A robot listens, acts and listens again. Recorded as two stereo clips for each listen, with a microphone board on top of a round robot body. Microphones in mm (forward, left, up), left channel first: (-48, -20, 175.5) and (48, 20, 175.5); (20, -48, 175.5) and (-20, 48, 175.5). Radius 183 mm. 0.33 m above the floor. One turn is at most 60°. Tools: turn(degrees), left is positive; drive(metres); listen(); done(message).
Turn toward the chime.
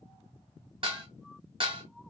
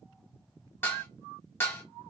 listen()
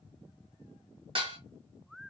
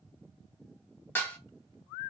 listen()
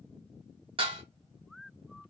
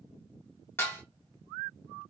done("I can't make out a chime, only dishes clattering.")